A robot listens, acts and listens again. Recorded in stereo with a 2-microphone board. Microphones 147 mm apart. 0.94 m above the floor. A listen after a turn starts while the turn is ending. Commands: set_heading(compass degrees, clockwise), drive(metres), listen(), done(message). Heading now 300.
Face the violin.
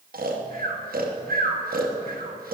listen()
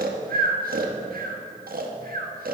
listen()
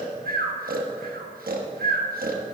done("I can't make out a violin, only snoring.")